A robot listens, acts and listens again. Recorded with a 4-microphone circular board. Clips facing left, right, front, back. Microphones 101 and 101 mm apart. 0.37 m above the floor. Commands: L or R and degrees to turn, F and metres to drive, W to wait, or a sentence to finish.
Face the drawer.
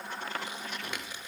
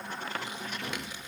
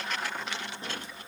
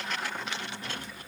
W
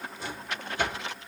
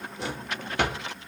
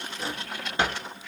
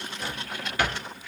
R65
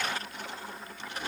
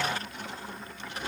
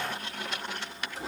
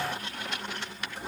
W
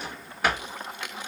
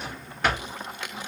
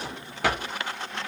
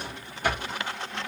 Facing the drawer, 1 to 2 m away.